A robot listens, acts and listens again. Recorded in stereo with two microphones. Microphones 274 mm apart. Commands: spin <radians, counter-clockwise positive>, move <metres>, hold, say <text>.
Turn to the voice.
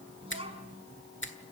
spin -0.35
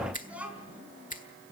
say Facing the child speaking.